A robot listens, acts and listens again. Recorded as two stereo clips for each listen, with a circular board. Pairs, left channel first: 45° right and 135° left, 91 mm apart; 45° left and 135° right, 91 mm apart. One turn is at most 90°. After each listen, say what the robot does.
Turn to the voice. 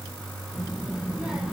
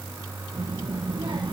Turn 90° right.
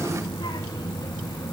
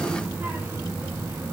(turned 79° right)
Turn 80° right.
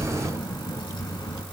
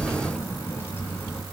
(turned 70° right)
Turn 20° right.
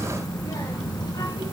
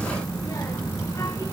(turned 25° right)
Turn 10° right.
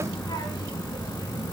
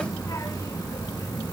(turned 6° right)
Facing the child speaking.